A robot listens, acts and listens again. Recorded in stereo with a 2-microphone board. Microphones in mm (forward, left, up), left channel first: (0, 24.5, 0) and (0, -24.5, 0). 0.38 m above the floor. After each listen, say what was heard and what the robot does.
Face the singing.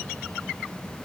Keep listening.
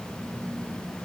Keep listening.
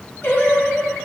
The singing: about 45° left or 135° left. Turn 45° left.
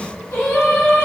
So it is at 85° left. Turn 85° left.
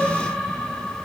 The singing is now 20° left. Turn 20° left.
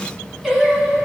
Found it: singing, straight ahead.